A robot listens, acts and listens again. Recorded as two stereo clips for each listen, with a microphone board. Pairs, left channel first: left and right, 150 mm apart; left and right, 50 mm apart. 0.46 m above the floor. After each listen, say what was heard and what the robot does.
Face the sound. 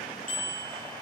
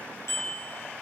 The bicycle bell: about 60° left or 120° left. Turn 60° left.
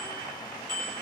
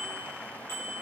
So it is at 60° left. Turn 60° left.
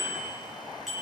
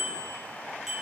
Found it: a bicycle bell, straight ahead, over 4 m away.